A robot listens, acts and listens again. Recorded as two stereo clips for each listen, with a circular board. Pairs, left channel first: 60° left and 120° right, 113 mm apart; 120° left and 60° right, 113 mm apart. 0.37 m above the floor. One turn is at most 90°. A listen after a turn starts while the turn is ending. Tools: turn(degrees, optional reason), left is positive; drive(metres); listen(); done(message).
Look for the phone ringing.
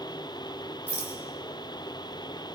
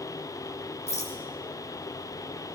listen()
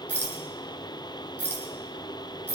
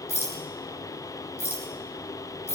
listen()
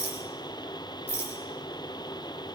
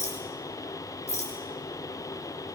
done("I can't make out a phone ringing, only a rattle.")